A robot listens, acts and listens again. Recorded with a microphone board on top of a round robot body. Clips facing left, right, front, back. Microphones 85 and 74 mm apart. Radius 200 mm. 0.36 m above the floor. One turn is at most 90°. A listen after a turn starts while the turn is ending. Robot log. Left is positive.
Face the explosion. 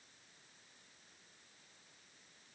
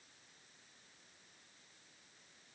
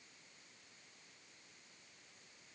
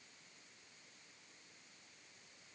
cmd idle
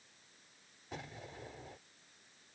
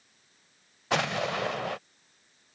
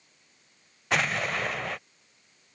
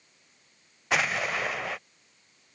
note: The explosion: 90° right.
cmd yaw -90
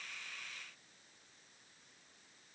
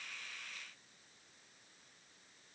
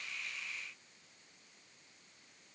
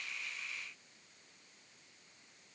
end: I heard an explosion from this way, but can't make it out now.